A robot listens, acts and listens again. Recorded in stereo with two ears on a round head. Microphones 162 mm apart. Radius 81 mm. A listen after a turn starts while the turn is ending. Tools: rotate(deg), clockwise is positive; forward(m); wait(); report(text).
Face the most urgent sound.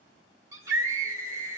rotate(20)
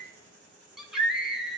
report("Facing the scream.")